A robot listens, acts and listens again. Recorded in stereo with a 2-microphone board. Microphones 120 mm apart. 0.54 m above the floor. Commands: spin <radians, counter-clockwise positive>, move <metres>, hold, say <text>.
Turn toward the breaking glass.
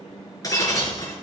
spin 0.52
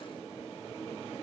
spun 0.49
hold
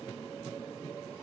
say I heard breaking glass, but can't make it out now. It was about straight ahead or 125° left.